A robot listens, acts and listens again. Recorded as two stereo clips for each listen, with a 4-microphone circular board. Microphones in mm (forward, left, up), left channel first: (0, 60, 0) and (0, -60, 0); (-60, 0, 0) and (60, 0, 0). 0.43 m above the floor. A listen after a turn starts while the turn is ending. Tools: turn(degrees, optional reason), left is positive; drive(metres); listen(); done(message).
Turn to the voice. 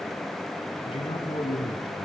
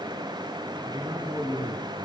turn(degrees=55, reason="The man speaking: 55° left.")
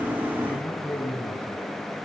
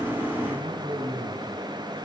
turn(degrees=15, reason="The man speaking is now 15° left.")
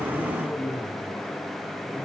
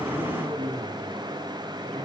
done("Facing the man speaking.")